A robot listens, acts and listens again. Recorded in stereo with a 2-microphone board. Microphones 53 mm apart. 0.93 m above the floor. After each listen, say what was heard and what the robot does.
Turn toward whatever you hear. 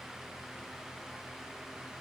Keep listening.
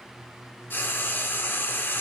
The frying: about 40° left or 140° left. Turn 40° left.
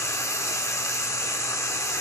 So it is at 95° left. Turn 95° left.
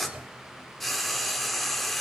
Facing the frying.